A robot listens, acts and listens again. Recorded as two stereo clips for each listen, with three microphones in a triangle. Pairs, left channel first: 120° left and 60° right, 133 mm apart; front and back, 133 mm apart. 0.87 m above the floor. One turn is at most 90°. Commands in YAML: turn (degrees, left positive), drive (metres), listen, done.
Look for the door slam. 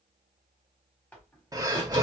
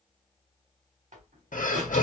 turn: -90
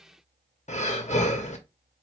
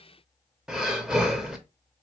turn: -70
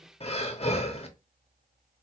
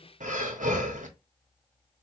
done: "I heard a door slam from this way, but can't make it out now."